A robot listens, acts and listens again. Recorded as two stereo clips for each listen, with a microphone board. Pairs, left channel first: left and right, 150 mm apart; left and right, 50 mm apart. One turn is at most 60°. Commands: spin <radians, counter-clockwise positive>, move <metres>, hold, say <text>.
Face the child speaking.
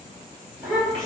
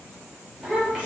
spin 0.52
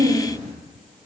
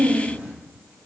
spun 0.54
spin -0.52
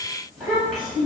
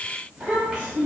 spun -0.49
say Found it: a child speaking, straight ahead.